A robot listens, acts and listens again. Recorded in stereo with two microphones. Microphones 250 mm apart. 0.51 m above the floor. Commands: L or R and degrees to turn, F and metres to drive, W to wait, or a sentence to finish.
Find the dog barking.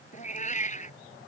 W
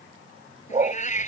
R30
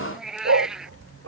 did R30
R105
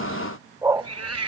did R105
R15
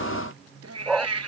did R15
Found it: a dog barking, straight ahead.